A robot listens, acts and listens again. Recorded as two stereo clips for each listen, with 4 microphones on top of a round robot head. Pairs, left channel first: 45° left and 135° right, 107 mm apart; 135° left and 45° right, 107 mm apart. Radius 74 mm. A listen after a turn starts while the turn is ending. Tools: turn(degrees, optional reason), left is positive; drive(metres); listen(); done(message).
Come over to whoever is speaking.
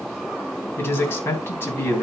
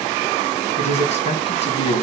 turn(degrees=115, reason="The man speaking: 115° left.")
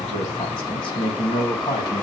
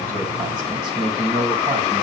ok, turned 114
drive(metres=1.0)
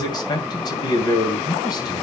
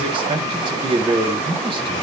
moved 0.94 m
drive(metres=1.0)
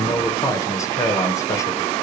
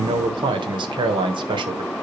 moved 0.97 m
turn(degrees=-15, reason="The man speaking is now 15° right.")
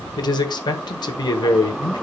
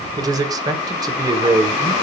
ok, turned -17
drive(metres=1.0)
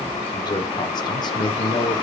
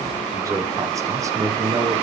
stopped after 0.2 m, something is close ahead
done("I am next to the man speaking.")